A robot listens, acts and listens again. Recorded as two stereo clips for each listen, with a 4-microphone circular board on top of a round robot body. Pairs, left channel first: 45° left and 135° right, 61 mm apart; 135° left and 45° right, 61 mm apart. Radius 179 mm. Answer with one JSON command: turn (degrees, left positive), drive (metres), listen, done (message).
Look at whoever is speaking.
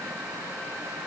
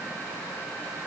{"listen": true}
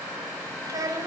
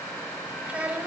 {"turn": -115}
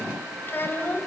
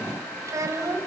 {"turn": -10}
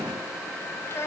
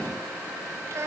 {"done": "Found it: a child speaking, straight ahead."}